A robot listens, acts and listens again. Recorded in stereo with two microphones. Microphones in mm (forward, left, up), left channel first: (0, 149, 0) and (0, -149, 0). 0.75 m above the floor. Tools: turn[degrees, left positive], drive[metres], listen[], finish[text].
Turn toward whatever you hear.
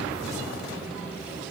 Action: listen[]
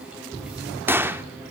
Action: turn[-30]
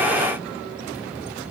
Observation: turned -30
Action: listen[]
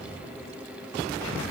Action: finish[I heard a gunshot, but can't make it out now. It was about 20° left or 140° right.]